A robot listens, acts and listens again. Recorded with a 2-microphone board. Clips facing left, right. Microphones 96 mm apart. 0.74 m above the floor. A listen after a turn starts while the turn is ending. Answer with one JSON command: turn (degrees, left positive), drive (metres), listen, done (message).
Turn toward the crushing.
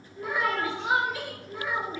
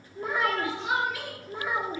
{"listen": true}
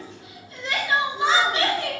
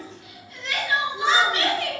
{"listen": true}
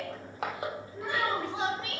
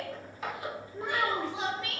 {"turn": 75}
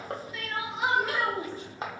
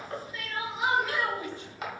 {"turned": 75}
{"turn": 30}
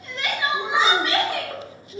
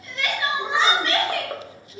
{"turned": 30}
{"listen": true}
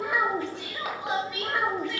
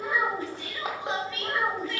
{"turn": -25}
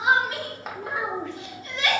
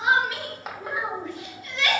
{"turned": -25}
{"done": "Found it: crushing, straight ahead, under 1 m away."}